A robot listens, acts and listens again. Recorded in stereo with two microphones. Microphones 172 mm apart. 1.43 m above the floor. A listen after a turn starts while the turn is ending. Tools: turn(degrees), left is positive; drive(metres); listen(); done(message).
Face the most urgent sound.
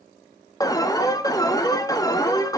turn(degrees=20)
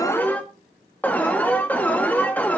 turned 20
turn(degrees=10)
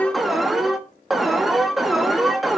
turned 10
done("Facing the alarm, 1 to 2 m away.")